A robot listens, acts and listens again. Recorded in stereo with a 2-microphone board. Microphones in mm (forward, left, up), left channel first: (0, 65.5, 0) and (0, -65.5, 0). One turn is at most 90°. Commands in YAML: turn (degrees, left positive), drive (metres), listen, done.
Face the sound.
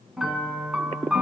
turn: -30
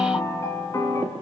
turn: 25
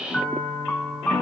turn: 10
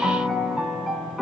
done: "Facing the piano, 1 to 2 m away."